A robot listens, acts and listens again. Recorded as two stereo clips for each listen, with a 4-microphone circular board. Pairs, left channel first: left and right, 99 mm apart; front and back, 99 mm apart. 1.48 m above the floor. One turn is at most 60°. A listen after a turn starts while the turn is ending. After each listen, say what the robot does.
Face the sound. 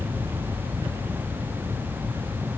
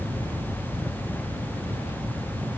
Keep listening.
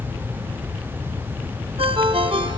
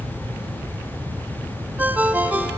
Turn 60° right.
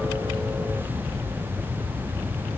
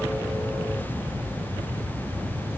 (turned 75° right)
Turn 35° right.
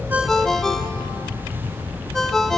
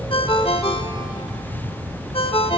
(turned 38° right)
Found it: a ringtone, straight ahead, 1 to 2 m away.